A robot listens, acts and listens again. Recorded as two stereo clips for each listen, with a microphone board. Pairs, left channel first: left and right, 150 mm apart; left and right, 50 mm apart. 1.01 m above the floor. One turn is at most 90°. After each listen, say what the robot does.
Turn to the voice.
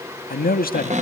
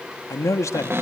Turn 90° left.
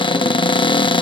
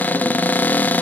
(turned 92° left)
Keep listening.
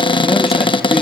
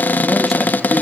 Keep listening.
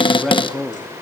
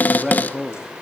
Found it: a man speaking, straight ahead, 1 to 2 m away.